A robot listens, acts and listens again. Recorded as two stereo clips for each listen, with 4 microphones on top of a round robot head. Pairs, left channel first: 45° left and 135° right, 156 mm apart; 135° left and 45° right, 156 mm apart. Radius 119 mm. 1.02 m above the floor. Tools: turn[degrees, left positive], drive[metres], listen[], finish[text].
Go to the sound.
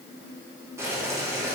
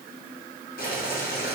Thought: The boiling: 150° left.
Action: turn[150]
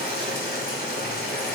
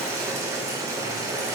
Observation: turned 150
Thought: The boiling is now 25° left.
Action: turn[25]
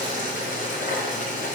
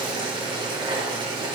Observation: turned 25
Thought: The boiling is now 10° left.
Action: turn[10]
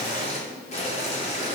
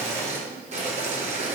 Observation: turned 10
Action: drive[1.0]
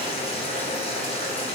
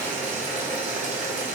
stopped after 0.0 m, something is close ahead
Action: finish[Something is in my way. I am facing the boiling but have not reached it.]